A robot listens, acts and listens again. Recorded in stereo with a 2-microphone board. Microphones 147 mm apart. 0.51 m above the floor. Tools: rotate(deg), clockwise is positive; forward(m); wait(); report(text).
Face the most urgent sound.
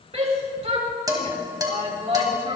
rotate(45)
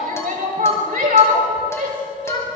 rotate(85)
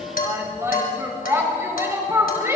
rotate(20)
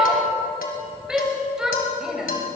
report("Facing the shout.")